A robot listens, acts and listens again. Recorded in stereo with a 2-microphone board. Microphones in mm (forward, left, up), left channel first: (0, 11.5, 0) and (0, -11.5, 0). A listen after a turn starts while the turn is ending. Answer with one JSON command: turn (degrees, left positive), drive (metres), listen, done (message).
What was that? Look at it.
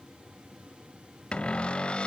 {"turn": 55}
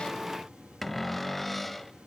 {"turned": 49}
{"done": "Found it: a cupboard door, straight ahead."}